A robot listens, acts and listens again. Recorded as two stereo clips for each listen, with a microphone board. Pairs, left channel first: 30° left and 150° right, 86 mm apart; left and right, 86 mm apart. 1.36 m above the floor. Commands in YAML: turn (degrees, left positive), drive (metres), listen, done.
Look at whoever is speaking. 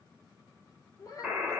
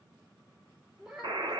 turn: -10
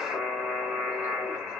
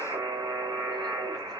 listen: true
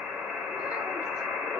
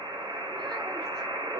listen: true
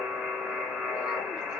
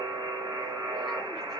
done: "I heard a child speaking from this way, but can't make it out now."